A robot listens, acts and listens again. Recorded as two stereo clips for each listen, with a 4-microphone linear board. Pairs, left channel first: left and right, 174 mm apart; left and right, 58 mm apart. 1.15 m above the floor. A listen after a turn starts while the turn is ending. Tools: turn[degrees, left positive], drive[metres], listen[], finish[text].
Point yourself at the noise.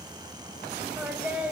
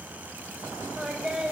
Action: turn[-30]
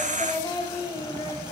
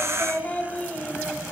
Thought: So it is at 25° left.
Action: turn[25]
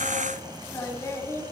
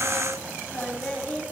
Thought: The singing is now 20° left.
Action: turn[20]
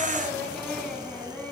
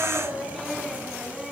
Thought: The singing is now 10° left.
Action: turn[10]
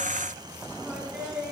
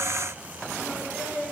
Action: finish[Facing the singing, 2 to 4 m away.]